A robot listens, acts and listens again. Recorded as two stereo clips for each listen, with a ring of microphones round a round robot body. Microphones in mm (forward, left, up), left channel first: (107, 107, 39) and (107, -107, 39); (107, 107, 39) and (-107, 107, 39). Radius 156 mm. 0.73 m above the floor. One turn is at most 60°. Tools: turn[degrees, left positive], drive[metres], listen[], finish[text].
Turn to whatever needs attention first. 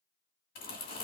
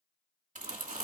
Action: listen[]
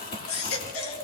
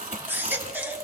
Thought: The baby crying: 100° left.
Action: turn[60]
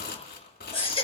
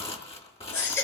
Thought: The baby crying is now 25° left.
Action: turn[25]
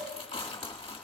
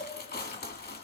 Action: listen[]
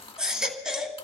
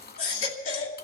Action: finish[Found it: a baby crying, straight ahead, 2 to 4 m away.]